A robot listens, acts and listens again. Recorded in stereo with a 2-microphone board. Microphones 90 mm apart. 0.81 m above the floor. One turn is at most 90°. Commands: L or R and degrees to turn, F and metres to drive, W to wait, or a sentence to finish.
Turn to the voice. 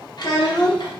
L50
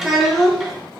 Found it: a child speaking, straight ahead, 1 to 2 m away.